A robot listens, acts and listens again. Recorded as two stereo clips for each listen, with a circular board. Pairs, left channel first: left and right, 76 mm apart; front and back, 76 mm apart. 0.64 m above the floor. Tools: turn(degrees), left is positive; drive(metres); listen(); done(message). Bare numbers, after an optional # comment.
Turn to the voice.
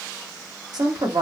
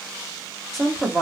# The woman speaking: 90° right.
turn(-90)
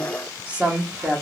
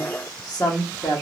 # The woman speaking is now 25° right.
turn(-25)
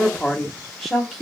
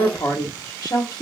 done("Found it: a woman speaking, straight ahead.")